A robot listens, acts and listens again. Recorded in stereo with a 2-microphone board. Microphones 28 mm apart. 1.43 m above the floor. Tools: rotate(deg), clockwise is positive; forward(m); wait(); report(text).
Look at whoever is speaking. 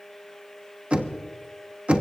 wait()
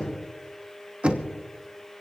wait()
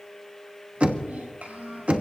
rotate(90)
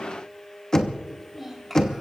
report("Found it: a child speaking, straight ahead.")